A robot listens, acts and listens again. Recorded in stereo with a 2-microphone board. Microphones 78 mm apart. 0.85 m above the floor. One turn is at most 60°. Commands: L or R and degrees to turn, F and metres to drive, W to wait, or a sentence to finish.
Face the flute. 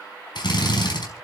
W
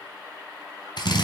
W
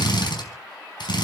I can't make out a flute to turn to.